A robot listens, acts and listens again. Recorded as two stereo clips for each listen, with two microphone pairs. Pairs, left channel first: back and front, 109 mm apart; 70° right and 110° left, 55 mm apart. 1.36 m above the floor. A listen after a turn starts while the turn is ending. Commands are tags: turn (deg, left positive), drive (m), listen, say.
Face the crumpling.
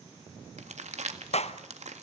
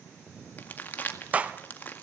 <turn deg="-15"/>
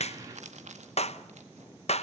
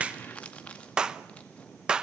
<say>Found it: crumpling, straight ahead.</say>